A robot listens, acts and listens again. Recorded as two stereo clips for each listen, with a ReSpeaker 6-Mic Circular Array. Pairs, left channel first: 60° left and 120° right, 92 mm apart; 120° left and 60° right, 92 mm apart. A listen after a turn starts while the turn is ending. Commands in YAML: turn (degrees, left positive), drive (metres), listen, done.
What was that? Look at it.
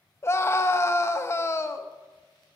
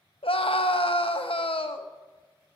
turn: 120
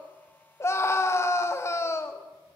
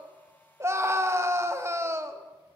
done: "Found it: a scream, straight ahead, 1 to 2 m away."